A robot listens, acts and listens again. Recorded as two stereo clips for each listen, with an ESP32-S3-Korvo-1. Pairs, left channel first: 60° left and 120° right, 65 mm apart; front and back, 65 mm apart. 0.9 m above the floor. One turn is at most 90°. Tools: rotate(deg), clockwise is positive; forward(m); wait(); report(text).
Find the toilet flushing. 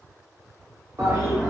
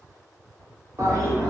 rotate(90)
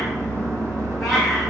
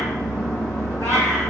rotate(80)
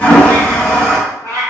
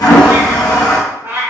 rotate(10)
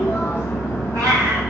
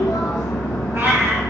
report("Facing the toilet flushing.")